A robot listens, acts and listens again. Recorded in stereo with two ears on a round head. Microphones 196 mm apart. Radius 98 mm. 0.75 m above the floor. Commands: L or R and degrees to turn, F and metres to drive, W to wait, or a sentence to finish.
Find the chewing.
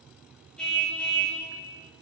W
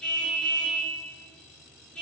W
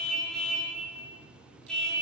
I can't make out chewing, only a car horn.